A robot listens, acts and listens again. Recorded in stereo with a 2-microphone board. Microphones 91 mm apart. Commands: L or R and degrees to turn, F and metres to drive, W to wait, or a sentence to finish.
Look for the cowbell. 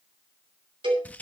R60
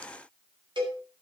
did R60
R55
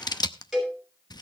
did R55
Facing the cowbell, over 4 m away.